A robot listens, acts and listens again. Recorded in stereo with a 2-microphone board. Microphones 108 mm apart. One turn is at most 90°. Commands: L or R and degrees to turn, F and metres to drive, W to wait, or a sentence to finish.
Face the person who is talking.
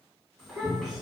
L30
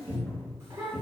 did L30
R25
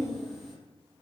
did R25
Found it: a child speaking, straight ahead.